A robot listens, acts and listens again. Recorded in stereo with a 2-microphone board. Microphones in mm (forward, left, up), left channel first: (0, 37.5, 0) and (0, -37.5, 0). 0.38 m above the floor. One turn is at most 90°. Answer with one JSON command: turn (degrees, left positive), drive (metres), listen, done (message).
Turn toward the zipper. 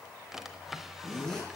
{"turn": 30}
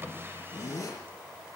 {"turn": 90}
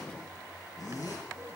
{"turn": 45}
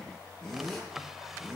{"done": "Facing the zipper, over 4 m away."}